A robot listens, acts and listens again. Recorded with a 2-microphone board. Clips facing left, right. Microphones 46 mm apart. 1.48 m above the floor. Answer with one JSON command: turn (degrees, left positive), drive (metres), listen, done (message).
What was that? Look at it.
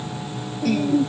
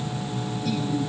{"turn": 70}
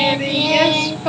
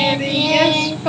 {"done": "Found it: singing, straight ahead."}